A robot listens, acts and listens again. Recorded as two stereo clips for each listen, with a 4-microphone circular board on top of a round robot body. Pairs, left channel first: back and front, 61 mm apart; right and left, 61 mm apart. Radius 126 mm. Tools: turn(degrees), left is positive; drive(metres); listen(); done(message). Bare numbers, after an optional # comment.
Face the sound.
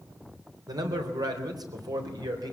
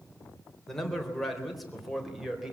done("Found it: a man speaking, straight ahead.")